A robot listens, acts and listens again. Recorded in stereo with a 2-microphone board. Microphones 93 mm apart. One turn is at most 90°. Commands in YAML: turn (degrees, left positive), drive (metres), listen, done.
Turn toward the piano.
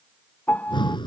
turn: 20
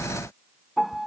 done: "Facing the piano."